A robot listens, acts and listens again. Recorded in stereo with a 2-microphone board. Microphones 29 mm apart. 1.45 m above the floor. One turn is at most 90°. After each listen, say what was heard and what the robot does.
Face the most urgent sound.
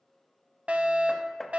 The fire alarm: about 55° right or 125° right. Turn 55° right.
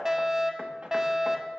So it is at 20° right. Turn 20° right.
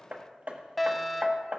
Found it: a fire alarm, straight ahead.